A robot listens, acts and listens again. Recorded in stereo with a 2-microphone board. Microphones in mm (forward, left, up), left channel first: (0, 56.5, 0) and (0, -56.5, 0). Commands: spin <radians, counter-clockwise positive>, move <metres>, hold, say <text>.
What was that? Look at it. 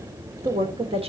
spin -1.05
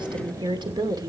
spin -0.61
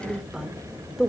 say Facing the woman speaking.